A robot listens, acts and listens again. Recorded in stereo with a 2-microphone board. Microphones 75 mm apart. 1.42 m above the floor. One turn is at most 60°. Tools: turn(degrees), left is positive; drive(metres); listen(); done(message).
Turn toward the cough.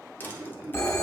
turn(degrees=-45)
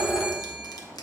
listen()
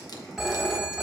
listen()
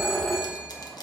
done("I heard a cough, but can't make it out now. It was about straight ahead or 90° right.")